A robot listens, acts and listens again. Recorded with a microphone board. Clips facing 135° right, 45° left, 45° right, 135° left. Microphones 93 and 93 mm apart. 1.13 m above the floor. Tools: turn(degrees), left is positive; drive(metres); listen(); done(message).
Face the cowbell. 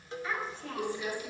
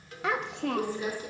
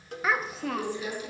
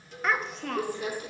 turn(degrees=-70)
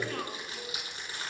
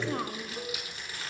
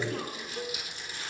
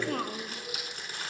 done("Facing the cowbell.")